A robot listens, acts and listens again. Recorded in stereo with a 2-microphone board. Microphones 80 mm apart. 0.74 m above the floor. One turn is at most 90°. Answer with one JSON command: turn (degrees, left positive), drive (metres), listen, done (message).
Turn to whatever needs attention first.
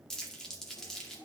{"listen": true}
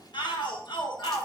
{"turn": 70}
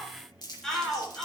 {"done": "Found it: a shout, straight ahead, 2 to 4 m away."}